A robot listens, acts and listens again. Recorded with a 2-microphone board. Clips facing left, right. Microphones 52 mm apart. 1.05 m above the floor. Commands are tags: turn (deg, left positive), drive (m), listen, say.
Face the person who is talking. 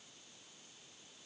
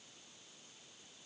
<listen/>
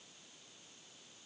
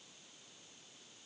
<listen/>
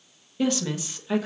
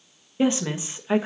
<turn deg="-25"/>
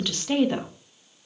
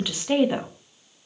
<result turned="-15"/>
<turn deg="-10"/>
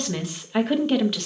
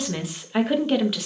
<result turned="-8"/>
<say>Found it: a woman speaking, straight ahead, 1 to 2 m away.</say>